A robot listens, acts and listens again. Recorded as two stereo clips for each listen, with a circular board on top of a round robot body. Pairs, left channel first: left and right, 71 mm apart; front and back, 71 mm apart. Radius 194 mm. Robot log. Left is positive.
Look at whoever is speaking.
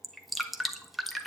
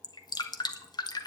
cmd idle
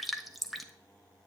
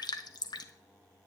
cmd idle
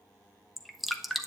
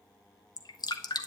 end: I can't make out anyone speaking to turn to.